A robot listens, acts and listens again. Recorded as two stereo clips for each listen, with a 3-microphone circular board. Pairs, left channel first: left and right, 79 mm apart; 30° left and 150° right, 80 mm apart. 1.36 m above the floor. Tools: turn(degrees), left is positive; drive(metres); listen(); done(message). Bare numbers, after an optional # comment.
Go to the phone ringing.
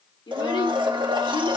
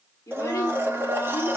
listen()
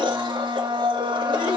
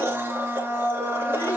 listen()
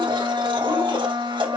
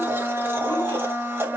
done("I can't make out a phone ringing to turn to.")